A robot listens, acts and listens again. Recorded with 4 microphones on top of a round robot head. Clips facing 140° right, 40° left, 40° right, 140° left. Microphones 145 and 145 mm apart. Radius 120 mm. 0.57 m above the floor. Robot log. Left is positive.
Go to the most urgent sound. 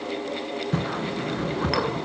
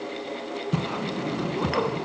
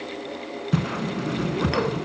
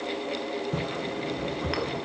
cmd idle
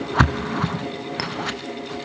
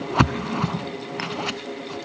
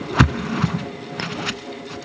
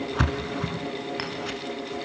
cmd idle
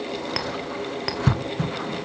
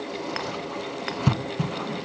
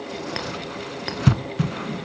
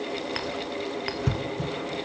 end: I can't make out anything urgent, only a clink and a whoosh.